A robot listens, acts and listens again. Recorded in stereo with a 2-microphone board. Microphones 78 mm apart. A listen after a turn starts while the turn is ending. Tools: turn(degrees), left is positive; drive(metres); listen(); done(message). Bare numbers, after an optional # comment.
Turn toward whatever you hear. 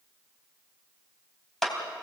turn(30)
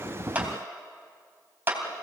# So it is at 25° right.
turn(-25)
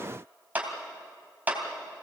# The clap is now 20° right.
turn(-20)
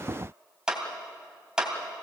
# The clap is now 10° right.
turn(-10)
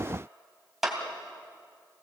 done("Facing the clap, 2 to 4 m away.")